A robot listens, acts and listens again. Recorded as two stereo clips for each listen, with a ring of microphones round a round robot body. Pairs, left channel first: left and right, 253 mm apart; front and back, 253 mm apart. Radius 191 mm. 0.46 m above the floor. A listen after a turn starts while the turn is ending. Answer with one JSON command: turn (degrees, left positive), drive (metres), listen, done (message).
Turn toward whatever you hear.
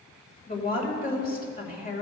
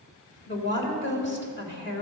{"turn": 40}
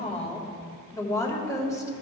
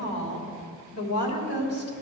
{"turn": 15}
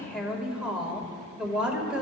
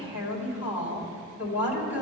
{"done": "Facing the woman speaking."}